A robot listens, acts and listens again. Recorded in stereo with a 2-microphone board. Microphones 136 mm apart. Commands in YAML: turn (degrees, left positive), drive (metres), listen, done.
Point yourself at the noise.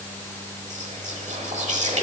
turn: -55
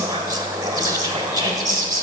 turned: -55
turn: -35
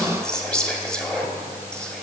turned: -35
done: "Found it: whispering, straight ahead, 1 to 2 m away."